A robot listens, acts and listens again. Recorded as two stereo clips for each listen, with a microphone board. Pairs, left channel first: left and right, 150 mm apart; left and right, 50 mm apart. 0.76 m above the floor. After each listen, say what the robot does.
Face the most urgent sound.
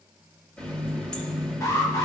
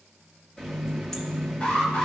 Turn 25° left.
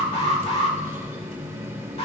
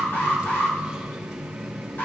Turn 125° left.
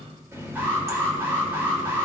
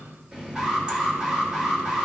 Turn 20° right.
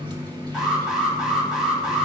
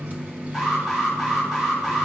Facing the alarm, 2 to 4 m away.